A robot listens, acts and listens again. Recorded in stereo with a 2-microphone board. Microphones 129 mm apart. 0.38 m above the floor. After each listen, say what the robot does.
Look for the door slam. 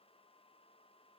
Keep listening.
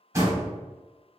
Turn 25° right.
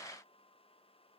Keep listening.
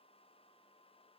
I heard a door slam, but can't make it out now. It was about straight ahead or 130° right.